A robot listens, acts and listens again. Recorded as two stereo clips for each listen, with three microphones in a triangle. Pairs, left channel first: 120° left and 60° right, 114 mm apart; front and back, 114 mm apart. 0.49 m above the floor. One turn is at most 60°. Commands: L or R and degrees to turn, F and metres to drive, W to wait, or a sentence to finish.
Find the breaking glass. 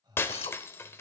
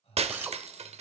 R60
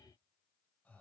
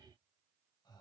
R60
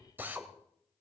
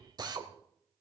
R55
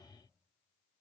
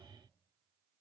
I heard breaking glass from this way, but can't make it out now.